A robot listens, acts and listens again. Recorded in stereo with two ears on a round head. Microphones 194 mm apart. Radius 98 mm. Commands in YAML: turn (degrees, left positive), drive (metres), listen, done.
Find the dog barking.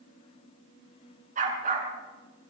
turn: -40
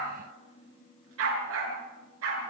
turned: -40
turn: -105
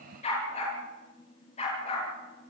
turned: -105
turn: 30
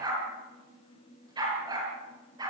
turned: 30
turn: -20
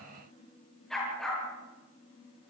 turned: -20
done: "Found it: a dog barking, straight ahead."